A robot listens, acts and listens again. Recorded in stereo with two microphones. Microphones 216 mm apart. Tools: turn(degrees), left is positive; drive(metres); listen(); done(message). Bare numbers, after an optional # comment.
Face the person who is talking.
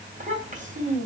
# The child speaking: about 35° right or 145° right.
turn(-35)
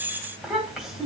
done("Facing the child speaking, 2 to 4 m away.")